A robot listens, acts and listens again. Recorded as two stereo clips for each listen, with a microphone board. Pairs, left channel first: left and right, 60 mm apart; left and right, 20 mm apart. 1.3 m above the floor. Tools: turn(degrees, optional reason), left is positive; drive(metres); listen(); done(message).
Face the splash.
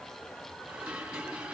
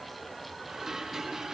listen()
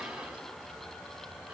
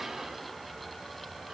listen()
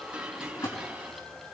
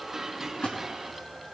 turn(degrees=90)
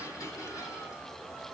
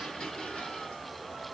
done("I heard a splash from this way, but can't make it out now.")